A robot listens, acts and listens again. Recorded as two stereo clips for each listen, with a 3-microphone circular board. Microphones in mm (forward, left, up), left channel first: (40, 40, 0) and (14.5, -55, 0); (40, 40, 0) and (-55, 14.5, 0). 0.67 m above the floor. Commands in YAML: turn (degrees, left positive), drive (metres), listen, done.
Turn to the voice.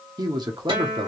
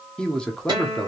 turn: -65
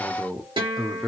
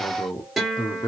turn: -10
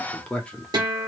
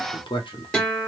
done: "Found it: a man speaking, straight ahead, under 1 m away."